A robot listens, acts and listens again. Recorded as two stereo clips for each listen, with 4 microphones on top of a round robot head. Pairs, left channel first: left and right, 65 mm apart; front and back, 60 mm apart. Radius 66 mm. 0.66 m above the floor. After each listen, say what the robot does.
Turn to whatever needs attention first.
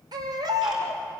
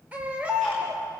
Turn 105° right.
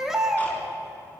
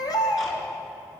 Found it: a baby crying, straight ahead.